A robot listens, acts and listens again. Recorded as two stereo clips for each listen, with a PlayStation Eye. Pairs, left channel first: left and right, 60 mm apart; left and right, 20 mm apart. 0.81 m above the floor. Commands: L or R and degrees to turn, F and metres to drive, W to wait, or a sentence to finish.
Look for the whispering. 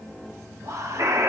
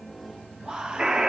R60
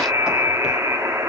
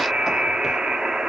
W
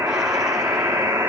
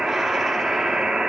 W
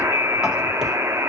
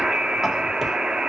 I heard whispering, but can't make it out now. It was about straight ahead or 60° right.